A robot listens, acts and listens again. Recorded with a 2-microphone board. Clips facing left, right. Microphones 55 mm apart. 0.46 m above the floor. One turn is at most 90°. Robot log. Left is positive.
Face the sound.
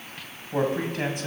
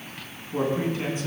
note: The man speaking: about 60° left or 120° left.
cmd yaw +60
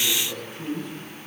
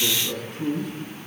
end: Facing the man speaking, over 4 m away.